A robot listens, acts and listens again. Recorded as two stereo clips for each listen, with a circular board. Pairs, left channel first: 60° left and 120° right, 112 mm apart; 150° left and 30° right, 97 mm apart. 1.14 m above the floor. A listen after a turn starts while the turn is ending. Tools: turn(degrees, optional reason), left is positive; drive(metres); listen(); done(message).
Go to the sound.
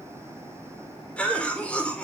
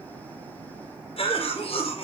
turn(degrees=140, reason="The cough: 140° left.")
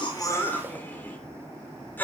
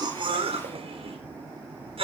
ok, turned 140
turn(degrees=-15, reason="The cough is now 15° right.")
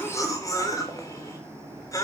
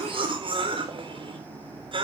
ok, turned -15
drive(metres=1.0)
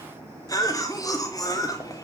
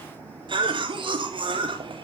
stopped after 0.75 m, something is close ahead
done("Something is in my way. I am facing the cough but have not reached it.")